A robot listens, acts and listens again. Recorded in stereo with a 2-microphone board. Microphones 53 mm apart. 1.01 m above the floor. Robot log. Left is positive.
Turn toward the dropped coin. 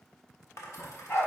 note: The dropped coin: about 65° left or 115° left.
cmd yaw +65
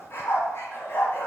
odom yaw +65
cmd idle
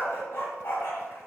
end: I heard a dropped coin, but can't make it out now. It was about straight ahead or 50° left.